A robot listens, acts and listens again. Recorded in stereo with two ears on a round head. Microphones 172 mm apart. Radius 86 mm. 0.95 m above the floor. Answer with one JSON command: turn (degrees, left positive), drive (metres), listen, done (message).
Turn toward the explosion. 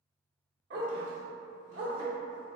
{"listen": true}
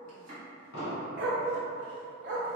{"turn": 55}
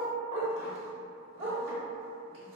{"listen": true}
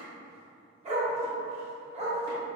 {"done": "I heard an explosion, but can't make it out now. It was about straight ahead or 70° left."}